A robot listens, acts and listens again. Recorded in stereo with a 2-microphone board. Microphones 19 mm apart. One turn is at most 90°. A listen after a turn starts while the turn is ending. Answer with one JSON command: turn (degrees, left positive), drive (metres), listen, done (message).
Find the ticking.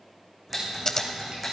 {"turn": -30}
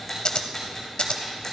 {"turn": 20}
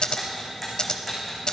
{"done": "Facing the ticking, over 4 m away."}